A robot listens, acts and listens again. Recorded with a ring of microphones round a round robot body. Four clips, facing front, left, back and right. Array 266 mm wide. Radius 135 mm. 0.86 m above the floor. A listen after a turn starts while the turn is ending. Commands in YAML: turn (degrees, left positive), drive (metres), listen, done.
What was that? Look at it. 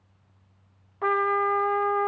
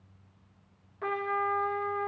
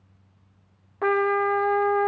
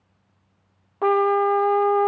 turn: -120
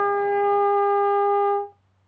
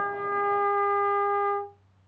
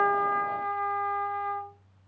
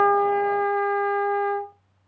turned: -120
turn: -30
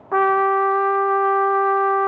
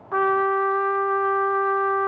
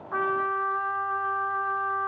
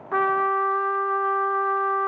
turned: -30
done: "Found it: a trumpet, straight ahead, under 1 m away."